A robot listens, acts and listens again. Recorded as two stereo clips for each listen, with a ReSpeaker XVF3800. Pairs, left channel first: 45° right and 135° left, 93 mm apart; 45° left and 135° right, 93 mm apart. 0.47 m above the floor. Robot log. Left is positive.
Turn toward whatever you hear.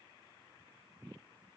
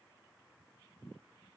cmd idle
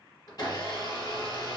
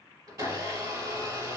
note: The blender: 90° right.
cmd yaw -90
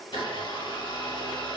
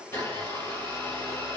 note: The blender is now 15° right.
cmd yaw -15
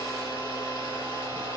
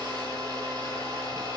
end: Found it: a blender, straight ahead, 1 to 2 m away.